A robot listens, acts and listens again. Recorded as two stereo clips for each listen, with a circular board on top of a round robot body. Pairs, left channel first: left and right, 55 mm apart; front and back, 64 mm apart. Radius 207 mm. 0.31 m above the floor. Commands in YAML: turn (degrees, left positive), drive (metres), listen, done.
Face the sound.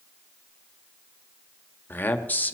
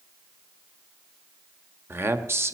turn: 145
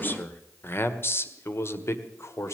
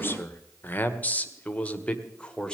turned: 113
turn: 70
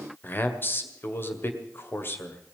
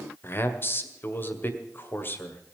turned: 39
turn: 50
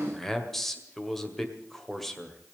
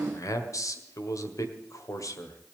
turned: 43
done: "Facing the man speaking, 2 to 4 m away."